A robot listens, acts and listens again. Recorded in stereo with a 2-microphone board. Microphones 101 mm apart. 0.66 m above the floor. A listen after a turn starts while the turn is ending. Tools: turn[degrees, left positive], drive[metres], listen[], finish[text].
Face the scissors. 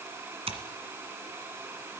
Action: turn[-90]
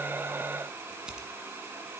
Thought: So it is at 10° right.
Action: turn[-10]
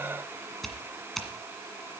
Action: finish[Found it: scissors, straight ahead.]